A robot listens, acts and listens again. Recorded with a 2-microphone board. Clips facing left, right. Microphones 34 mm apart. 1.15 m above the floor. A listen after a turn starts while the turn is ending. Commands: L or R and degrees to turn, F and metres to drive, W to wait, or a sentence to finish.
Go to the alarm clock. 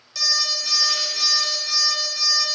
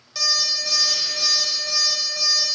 R30
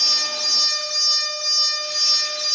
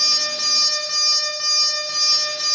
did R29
R140
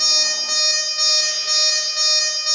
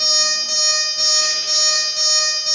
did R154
L15
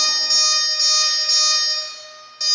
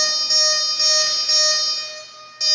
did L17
F1.0
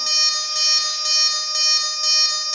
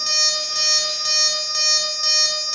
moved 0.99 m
F1.0
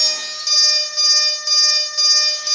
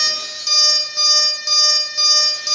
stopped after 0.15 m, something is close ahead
I am next to the alarm clock.